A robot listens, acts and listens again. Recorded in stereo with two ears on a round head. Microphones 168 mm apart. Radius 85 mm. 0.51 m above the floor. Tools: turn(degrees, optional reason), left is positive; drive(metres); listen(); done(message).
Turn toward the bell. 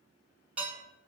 listen()
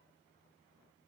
listen()
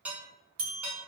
turn(degrees=-45, reason="The bell: about 45° right or 135° right.")
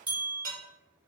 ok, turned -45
turn(degrees=-10, reason="So it is at 10° right.")
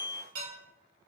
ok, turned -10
done("Facing the bell, 1 to 2 m away.")